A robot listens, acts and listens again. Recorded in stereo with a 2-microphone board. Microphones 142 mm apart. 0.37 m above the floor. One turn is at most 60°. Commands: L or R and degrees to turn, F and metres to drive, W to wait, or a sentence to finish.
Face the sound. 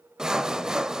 R30
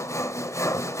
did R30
L25
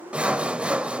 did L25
R10
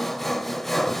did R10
Found it: sawing, straight ahead, under 1 m away.